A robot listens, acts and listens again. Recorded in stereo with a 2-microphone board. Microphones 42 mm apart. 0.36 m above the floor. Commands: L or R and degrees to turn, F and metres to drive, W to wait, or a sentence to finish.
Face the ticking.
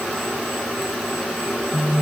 W
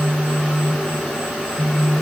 W
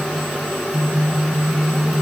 I can't make out ticking to turn to.